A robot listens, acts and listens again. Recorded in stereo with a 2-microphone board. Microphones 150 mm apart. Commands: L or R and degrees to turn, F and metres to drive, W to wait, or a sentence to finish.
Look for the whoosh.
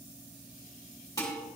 W
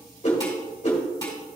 L50
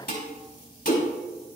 L70
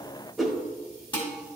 Found it: a whoosh, straight ahead.